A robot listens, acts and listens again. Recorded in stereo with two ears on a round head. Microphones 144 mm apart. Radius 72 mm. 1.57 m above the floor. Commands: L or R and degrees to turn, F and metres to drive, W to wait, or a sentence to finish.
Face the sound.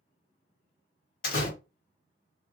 L60
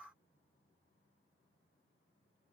W
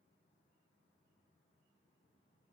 I heard a door slam, but can't make it out now. It was about straight ahead or 60° left.